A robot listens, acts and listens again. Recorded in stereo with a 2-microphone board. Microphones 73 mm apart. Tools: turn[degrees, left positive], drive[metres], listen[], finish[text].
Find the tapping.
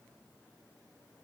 Action: listen[]
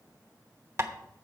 Thought: The tapping: about 40° right or 140° right.
Action: turn[-40]
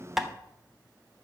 Action: finish[Facing the tapping.]